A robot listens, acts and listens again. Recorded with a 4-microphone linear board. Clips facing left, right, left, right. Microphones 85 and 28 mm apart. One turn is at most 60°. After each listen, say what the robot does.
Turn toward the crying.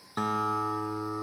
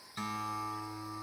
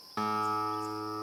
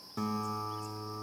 Keep listening.
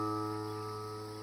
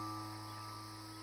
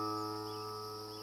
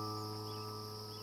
Keep listening.
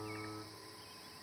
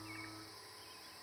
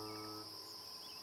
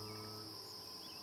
I can't make out crying to turn to.